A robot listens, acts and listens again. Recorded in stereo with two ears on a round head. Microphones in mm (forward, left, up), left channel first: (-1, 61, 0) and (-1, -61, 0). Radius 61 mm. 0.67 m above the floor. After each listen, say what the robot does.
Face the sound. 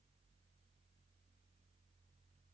Keep listening.
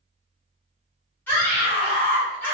Turn 30° left.
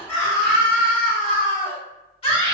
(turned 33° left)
Turn 130° left.
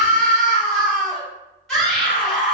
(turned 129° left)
Found it: a scream, straight ahead, 1 to 2 m away.